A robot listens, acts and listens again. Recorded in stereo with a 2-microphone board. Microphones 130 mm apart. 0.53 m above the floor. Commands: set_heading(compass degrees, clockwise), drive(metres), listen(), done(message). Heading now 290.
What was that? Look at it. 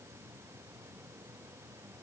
listen()
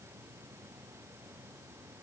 listen()
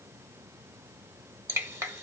set_heading(310)
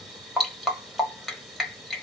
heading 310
done("Found it: dripping, straight ahead.")